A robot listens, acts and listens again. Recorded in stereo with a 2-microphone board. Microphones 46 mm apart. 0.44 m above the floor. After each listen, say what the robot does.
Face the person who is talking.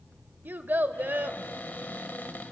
Turn 45° right.
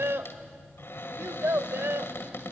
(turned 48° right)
Turn 80° right.
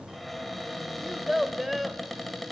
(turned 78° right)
Facing the child speaking.